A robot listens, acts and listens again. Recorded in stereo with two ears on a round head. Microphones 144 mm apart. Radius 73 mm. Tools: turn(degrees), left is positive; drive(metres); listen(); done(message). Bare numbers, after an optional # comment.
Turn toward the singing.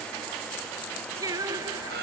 # The singing: about 20° right or 160° right.
turn(-20)
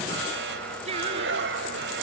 # The singing: about 40° right or 140° right.
turn(-40)
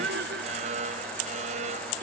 # So it is at 105° right.
turn(-105)
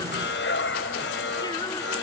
# The singing is now 25° left.
turn(25)
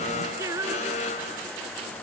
# The singing is now 20° right.
turn(-20)
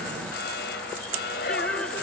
listen()
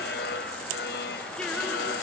listen()
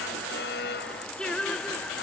done("Facing the singing.")